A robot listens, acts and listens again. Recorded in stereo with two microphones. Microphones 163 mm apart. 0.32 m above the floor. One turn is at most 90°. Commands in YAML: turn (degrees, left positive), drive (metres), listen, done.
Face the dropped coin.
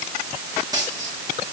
turn: -25
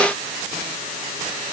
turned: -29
listen: true
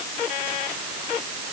done: "I heard a dropped coin, but can't make it out now. It was about 5° left or 130° right."